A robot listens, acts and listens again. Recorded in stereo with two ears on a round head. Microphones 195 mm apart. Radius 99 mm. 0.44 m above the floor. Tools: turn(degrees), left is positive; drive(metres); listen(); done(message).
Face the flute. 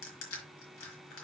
listen()
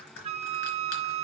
turn(degrees=-30)
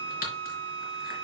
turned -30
turn(degrees=-120)
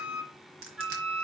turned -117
done("Facing the flute.")